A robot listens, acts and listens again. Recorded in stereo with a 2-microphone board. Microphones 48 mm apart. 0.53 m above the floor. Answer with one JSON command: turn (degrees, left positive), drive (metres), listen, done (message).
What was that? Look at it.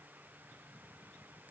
{"listen": true}
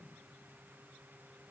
{"listen": true}
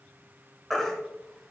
{"turn": 30}
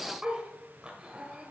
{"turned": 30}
{"listen": true}
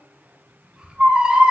{"turn": -25}
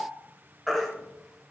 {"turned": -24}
{"done": "Found it: a baby crying, straight ahead."}